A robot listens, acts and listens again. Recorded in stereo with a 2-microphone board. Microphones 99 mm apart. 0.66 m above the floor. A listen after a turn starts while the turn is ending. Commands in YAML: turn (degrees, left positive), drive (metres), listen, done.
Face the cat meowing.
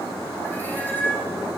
turn: 20
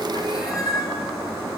turn: 135
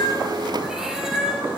done: "Found it: a cat meowing, straight ahead, 2 to 4 m away."